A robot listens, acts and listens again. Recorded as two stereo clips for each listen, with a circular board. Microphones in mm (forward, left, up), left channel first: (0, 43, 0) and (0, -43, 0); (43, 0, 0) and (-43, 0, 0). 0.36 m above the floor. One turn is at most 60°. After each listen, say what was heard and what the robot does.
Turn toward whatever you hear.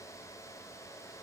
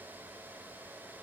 Keep listening.
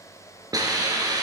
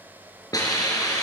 The hiss: 45° right. Turn 45° right.
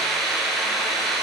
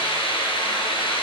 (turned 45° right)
Found it: a hiss, straight ahead.